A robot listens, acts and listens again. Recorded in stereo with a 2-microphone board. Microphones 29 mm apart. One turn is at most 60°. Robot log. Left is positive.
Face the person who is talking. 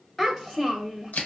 note: The child speaking: about 20° left or 160° left.
cmd yaw +20
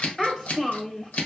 note: So it is at 140° left.
cmd yaw +60
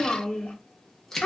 note: The child speaking is now 90° left.
cmd yaw +60
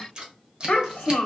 note: The child speaking is now 45° left.
cmd yaw +45
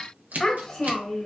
end: Facing the child speaking, under 1 m away.